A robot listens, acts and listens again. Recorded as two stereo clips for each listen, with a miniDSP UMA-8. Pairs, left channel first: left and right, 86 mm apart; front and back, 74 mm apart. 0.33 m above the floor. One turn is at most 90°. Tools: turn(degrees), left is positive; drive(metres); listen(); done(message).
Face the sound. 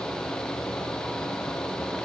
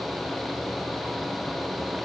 listen()
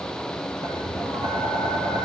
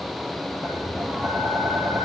turn(degrees=-90)
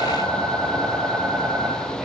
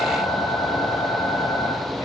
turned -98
done("Facing the tapping.")